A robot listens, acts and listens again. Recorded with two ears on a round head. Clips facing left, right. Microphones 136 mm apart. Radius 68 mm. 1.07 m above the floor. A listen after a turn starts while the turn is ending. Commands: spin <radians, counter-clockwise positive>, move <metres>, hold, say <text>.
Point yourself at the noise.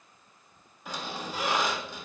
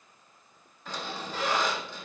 spin 0.52
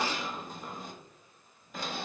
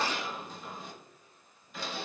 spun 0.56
spin 2.44
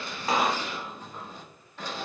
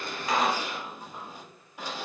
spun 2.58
spin -0.17
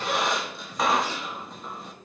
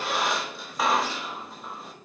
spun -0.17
say Facing the squeak, 1 to 2 m away.